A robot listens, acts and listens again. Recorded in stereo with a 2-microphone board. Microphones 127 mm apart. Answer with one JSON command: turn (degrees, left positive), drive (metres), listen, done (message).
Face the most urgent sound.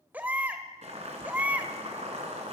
{"turn": -30}
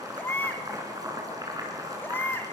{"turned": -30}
{"turn": 15}
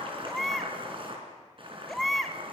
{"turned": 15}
{"done": "Facing the baby crying."}